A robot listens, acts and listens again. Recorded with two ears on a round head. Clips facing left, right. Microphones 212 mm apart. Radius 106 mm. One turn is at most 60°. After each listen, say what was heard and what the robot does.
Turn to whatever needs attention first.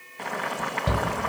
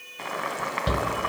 The shout: about 20° right or 160° right. Turn 20° right.
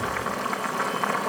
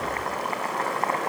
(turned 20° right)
Keep listening.
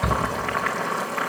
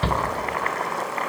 So it is at 135° right. Turn 60° right.
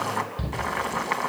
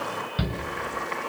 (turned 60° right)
The shout is now 70° right. Turn 60° right.
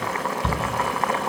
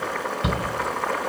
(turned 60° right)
The shout is now 30° right. Turn 30° right.
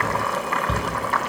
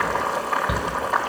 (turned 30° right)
Facing the shout.